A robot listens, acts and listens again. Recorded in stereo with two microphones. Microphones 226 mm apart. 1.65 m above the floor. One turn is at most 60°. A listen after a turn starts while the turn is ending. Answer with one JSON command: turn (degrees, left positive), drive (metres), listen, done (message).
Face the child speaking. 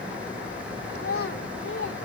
{"turn": 60}
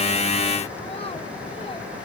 {"listen": true}
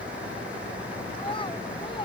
{"turn": 20}
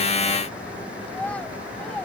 {"done": "Facing the child speaking."}